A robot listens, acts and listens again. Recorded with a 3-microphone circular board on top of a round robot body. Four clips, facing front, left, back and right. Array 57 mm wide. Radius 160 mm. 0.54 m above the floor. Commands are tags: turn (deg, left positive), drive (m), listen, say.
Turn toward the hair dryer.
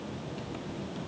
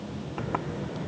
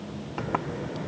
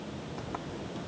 <listen/>
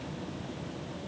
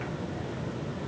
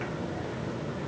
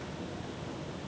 <listen/>
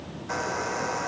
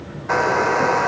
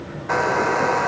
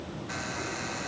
<turn deg="120"/>
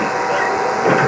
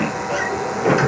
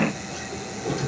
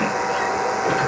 <turn deg="-10"/>
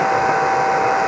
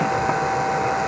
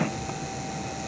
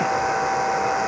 <say>Facing the hair dryer.</say>